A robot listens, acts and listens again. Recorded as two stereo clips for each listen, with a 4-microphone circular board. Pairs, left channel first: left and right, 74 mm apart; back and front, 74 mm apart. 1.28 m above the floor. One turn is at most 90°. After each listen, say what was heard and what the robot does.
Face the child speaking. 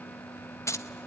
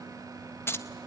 Keep listening.
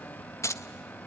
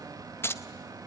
Keep listening.
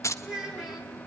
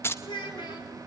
The child speaking: 175° right. Turn 90° right.
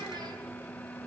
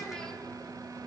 Nothing new. It was at 85° right. Turn 85° right.
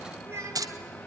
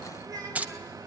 The child speaking is now 35° right. Turn 35° right.
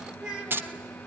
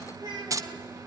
The child speaking is now 10° right. Turn 10° right.
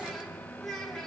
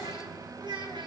Facing the child speaking.